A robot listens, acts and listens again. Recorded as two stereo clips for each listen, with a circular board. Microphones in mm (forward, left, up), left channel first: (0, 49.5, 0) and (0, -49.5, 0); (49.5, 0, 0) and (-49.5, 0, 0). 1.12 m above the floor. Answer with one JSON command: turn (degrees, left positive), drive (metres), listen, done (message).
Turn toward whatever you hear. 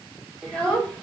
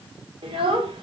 {"turn": 170}
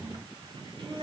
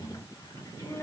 {"turn": -55}
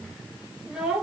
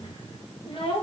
{"turn": -10}
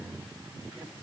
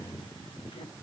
{"listen": true}
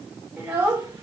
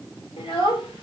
{"turn": -20}
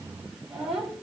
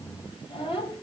{"done": "Found it: a child speaking, straight ahead, 2 to 4 m away."}